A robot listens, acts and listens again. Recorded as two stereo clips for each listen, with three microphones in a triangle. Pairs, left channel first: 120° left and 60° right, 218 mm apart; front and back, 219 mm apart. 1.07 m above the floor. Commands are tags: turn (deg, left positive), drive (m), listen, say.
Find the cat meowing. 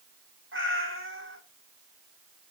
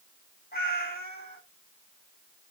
<turn deg="-45"/>
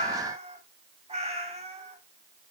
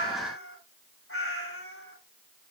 <say>Facing the cat meowing.</say>